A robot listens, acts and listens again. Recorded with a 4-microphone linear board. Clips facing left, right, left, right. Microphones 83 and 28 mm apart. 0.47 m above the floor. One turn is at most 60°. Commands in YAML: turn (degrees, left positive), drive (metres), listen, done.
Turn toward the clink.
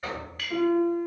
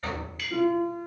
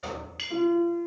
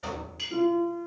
turn: 50
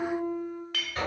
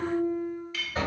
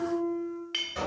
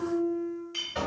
turn: 60
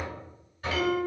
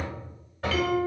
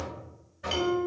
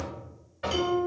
turn: 10
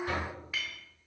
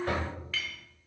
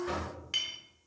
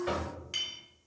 turn: 15
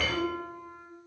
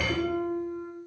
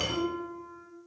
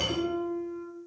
listen: true
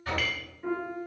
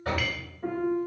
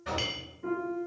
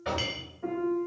listen: true
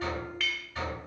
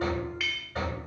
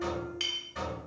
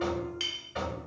done: "Found it: a clink, straight ahead, under 1 m away."